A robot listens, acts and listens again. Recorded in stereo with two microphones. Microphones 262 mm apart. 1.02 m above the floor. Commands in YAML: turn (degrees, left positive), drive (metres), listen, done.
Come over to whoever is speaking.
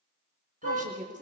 turn: -30
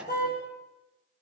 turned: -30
listen: true
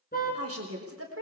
turn: -120
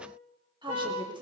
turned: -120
turn: -20
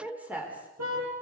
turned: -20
drive: 1.0
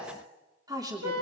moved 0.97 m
turn: -15
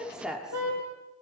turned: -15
drive: 1.0
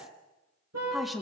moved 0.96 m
drive: 1.0
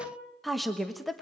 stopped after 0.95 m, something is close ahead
done: "Arrived at the woman speaking, straight ahead."